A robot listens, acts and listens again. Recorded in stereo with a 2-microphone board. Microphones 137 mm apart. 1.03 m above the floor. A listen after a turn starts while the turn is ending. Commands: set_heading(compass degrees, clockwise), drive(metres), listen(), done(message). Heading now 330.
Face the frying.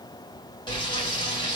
set_heading(300)
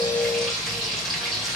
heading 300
done("Found it: frying, straight ahead, 2 to 4 m away.")